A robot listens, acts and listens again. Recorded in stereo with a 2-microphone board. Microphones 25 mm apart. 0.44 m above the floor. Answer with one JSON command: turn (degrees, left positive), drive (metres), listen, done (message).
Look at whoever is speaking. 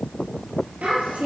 {"turn": -90}
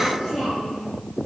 {"done": "Found it: a child speaking, straight ahead."}